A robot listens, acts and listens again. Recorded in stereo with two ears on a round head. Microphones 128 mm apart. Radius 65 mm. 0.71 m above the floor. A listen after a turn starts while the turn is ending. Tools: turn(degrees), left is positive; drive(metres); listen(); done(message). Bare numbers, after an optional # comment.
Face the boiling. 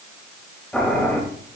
turn(30)
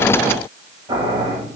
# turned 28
# So it is at 25° right.
turn(-25)
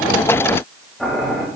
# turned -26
done("Found it: boiling, straight ahead.")